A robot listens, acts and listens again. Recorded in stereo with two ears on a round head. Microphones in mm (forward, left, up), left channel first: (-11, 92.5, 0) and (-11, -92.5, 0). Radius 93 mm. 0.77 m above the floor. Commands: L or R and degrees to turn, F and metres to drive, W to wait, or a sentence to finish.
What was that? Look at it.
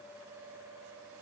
W
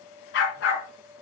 L55
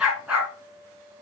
Facing the dog barking, 2 to 4 m away.